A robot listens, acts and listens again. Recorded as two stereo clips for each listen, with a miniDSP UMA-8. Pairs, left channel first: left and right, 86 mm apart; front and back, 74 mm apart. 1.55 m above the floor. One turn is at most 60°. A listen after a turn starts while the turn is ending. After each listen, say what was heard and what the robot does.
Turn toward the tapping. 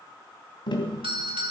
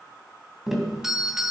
The tapping: 95° left. Turn 60° left.
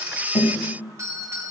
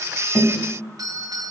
Nothing new. It was at 35° left. Turn 35° left.
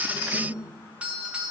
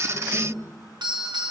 Keep listening.
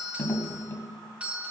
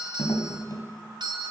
The tapping is now 25° left. Turn 25° left.
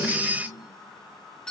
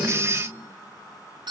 Keep listening.
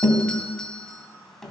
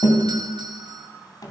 Found it: tapping, straight ahead.